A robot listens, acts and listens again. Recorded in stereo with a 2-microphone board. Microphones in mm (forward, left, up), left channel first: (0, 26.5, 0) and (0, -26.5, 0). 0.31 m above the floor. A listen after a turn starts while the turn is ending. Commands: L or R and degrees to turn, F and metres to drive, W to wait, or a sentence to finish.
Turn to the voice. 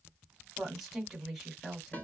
L30
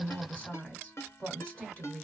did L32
L150
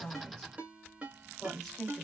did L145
Facing the woman speaking, 1 to 2 m away.